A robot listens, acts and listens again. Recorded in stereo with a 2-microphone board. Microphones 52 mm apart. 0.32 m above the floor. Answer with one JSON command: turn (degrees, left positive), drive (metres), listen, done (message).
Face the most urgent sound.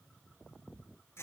{"listen": true}
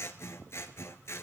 {"listen": true}
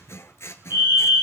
{"turn": -55}
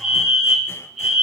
{"done": "Found it: a fire alarm, straight ahead."}